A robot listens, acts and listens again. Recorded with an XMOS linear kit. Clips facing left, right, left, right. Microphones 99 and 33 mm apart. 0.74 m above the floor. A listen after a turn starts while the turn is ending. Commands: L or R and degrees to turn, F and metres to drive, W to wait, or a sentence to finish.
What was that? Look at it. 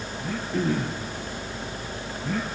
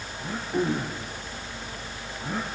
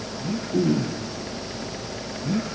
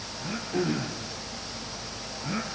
R15
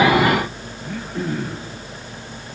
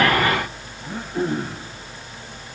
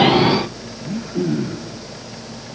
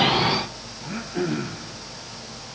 R150
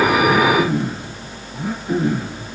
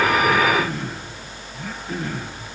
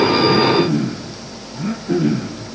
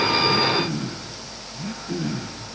L15
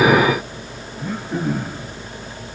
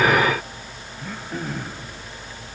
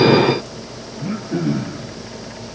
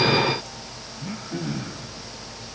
Found it: throat clearing, straight ahead.